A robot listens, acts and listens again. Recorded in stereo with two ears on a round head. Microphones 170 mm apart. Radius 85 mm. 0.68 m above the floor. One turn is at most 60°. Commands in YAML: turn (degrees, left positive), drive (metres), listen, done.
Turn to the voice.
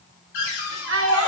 turn: -60
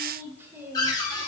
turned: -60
listen: true
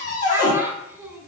turn: -10
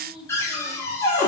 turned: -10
listen: true
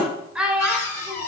done: "Facing the child speaking, 1 to 2 m away."